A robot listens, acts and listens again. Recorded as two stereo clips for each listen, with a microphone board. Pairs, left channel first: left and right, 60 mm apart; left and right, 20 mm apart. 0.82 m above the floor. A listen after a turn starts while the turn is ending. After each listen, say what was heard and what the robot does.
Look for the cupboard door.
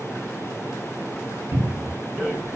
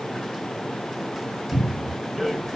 The cupboard door: about 70° right or 110° right. Turn 70° right.
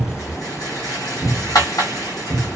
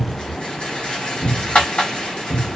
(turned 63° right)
So it is at 35° right. Turn 35° right.
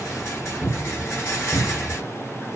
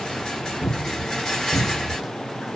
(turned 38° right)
Found it: a cupboard door, straight ahead, 1 to 2 m away.